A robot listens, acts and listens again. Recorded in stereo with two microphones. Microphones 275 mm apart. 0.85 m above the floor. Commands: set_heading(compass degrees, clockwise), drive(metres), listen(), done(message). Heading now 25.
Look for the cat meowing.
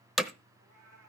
set_heading(115)
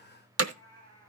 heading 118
set_heading(103)
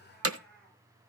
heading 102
done("Found it: a cat meowing, straight ahead.")